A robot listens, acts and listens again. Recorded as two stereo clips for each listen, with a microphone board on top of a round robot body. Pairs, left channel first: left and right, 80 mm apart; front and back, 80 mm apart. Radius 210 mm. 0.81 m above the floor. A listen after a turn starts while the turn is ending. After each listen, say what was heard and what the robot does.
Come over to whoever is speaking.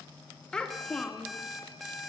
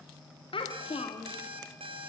The child speaking: 10° left. Turn 10° left.
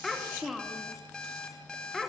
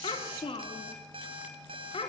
Drive 1.0 m forward.
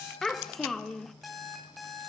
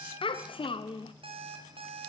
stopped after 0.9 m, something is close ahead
I am next to the child speaking.